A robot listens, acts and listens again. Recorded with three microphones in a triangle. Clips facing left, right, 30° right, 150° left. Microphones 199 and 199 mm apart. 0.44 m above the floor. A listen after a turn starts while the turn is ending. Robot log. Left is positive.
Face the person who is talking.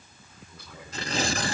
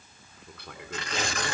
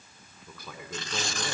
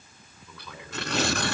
note: The man speaking: 70° right.
cmd yaw -70
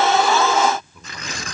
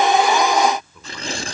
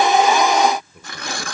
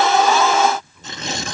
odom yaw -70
end: Found it: a man speaking, straight ahead, over 4 m away.